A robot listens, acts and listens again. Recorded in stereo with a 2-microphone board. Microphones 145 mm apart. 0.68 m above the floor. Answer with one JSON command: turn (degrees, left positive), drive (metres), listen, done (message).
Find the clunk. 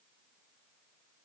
{"listen": true}
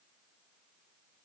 {"listen": true}
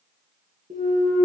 {"turn": -70}
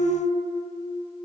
{"listen": true}
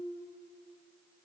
{"done": "I heard a clunk, but can't make it out now. It was about straight ahead or 40° right."}